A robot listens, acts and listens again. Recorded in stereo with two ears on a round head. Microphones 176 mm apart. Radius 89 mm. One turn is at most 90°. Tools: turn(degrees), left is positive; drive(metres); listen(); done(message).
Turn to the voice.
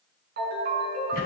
listen()
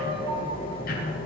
listen()
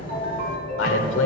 turn(degrees=65)
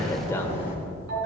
listen()
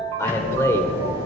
turn(degrees=15)
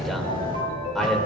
listen()
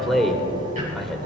done("Facing the man speaking.")